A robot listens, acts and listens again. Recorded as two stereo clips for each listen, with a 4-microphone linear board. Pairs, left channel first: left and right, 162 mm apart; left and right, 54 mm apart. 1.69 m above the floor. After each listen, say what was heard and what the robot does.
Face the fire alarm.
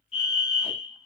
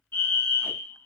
The fire alarm: about 40° left or 140° left. Turn 40° left.
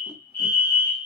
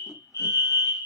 So it is at 95° left. Turn 95° left.
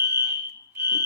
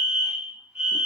The fire alarm is now 15° right. Turn 15° right.
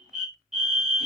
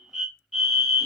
Facing the fire alarm, 1 to 2 m away.